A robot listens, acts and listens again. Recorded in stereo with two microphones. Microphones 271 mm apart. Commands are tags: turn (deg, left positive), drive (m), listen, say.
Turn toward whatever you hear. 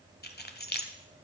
<turn deg="35"/>
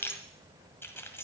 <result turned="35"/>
<turn deg="10"/>
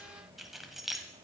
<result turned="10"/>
<say>Found it: keys jangling, straight ahead.</say>